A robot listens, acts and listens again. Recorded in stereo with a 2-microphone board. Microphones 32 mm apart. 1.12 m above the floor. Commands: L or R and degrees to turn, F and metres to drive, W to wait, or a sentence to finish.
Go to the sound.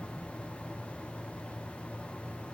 W
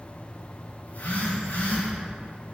L70
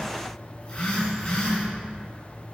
L25
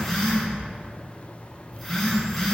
F1.0
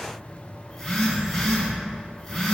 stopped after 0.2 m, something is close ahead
L10
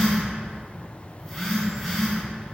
Something is in my way. I am facing the phone buzzing but have not reached it.